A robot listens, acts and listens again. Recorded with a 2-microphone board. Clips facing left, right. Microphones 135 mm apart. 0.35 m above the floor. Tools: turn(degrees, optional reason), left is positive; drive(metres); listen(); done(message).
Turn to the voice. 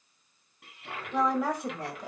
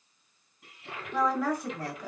turn(degrees=20, reason="The woman speaking: about 20° left or 160° left.")
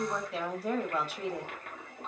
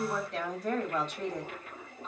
turn(degrees=10, reason="So it is at 10° left.")
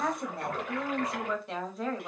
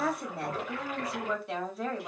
done("Found it: a woman speaking, straight ahead.")